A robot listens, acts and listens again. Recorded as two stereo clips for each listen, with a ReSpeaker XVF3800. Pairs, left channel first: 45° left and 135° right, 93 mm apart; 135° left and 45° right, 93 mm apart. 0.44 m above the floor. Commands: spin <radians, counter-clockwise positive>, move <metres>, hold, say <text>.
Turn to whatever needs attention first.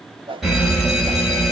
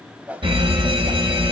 spin -0.79
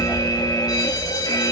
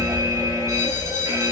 spin 0.17
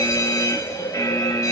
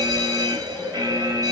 say Facing the fire alarm, over 4 m away.